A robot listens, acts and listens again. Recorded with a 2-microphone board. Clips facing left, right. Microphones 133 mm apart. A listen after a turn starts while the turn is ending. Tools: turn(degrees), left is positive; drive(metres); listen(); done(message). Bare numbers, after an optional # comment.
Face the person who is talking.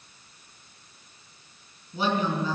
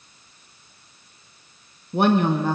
# The woman speaking: about 65° right or 115° right.
turn(-65)
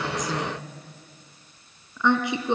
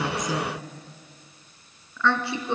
# So it is at 20° left.
turn(20)
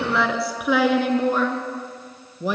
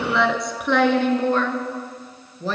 # The woman speaking is now 15° left.
turn(15)
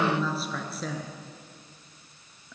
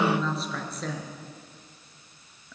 done("Found it: a woman speaking, straight ahead.")